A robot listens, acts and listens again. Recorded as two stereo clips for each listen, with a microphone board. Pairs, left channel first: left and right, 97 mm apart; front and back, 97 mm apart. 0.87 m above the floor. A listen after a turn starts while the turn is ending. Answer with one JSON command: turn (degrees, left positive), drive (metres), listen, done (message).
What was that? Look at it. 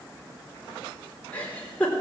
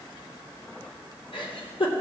{"turn": 15}
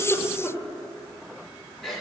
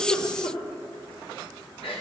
{"done": "Found it: a giggle, straight ahead."}